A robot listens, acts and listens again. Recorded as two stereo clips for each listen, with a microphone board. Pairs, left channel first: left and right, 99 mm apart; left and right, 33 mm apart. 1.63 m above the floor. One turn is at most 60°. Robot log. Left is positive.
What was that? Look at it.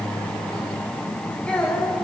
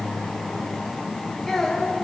cmd yaw +30
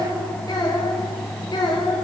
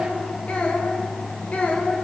note: So it is at 135° left.
cmd yaw +60
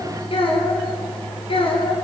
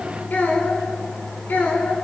note: The child speaking is now 65° left.
cmd yaw +60
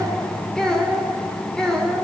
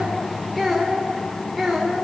end: Found it: a child speaking, straight ahead.